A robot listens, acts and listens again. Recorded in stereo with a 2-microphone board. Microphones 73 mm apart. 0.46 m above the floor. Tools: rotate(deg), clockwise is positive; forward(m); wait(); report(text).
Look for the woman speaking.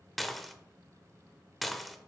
wait()
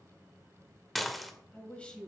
rotate(-30)
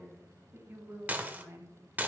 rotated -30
rotate(40)
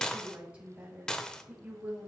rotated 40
rotate(15)
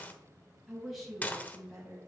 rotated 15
report("Facing the woman speaking, 2 to 4 m away.")